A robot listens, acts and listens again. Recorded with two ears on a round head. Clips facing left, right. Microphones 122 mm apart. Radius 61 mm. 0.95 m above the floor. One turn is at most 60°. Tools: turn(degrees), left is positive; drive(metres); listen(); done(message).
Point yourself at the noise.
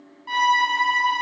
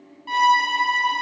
turn(degrees=-30)
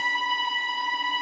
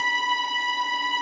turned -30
turn(degrees=-60)
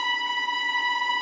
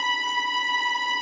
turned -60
turn(degrees=-55)
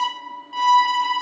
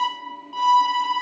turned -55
done("Found it: a violin, straight ahead.")